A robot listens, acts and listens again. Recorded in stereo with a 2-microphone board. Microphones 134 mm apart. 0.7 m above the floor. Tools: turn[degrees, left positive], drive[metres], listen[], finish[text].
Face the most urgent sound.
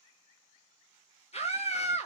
Thought: The scream: about 50° left or 130° left.
Action: turn[50]
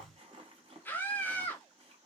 Thought: So it is at 15° left.
Action: turn[15]
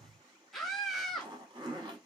Action: finish[Facing the scream, 1 to 2 m away.]